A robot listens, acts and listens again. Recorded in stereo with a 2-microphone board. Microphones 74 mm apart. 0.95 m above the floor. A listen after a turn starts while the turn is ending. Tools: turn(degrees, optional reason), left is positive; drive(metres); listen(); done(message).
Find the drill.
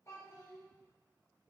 listen()
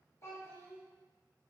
listen()
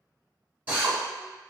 turn(degrees=-25, reason="The drill: about 25° right or 155° right.")
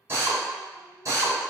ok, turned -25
turn(degrees=-130, reason="So it is at 130° right.")
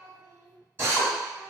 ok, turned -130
turn(degrees=-35, reason="The drill is now 35° right.")
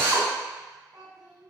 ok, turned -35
listen()
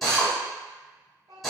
done("Facing the drill.")